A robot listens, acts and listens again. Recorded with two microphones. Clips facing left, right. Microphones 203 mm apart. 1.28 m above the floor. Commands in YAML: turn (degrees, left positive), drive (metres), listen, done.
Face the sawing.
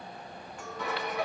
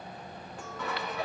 turn: 30
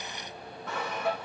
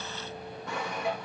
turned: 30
turn: -15
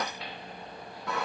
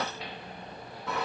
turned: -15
done: "Facing the sawing."